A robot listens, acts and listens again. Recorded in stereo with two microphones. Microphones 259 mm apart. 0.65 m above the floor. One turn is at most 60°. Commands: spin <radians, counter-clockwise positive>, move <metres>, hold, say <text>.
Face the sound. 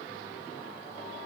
hold
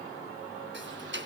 spin -0.87
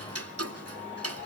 spin -1.05
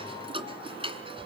spin -0.35
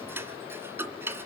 spin -0.17
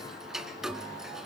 say Facing the ticking.